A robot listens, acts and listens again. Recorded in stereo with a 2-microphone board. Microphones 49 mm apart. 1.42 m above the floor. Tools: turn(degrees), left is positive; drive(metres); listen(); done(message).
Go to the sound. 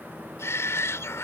turn(degrees=60)
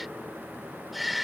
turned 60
drive(metres=1.0)
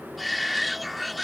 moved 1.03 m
drive(metres=1.0)
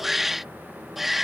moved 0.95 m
drive(metres=1.0)
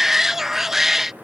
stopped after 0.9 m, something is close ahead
turn(degrees=-10)
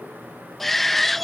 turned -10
done("Arrived at the shout, straight ahead.")